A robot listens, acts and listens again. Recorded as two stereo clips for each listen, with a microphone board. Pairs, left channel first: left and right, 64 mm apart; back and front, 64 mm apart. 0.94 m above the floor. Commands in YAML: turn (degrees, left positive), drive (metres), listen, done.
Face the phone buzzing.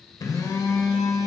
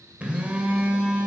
turn: 70
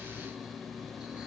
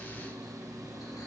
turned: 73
done: "Found it: a phone buzzing, straight ahead."